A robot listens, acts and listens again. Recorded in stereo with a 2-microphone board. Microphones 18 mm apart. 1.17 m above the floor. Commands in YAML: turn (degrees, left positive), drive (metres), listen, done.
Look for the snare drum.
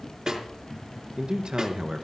turn: -45
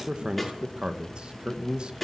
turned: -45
done: "Found it: a snare drum, straight ahead."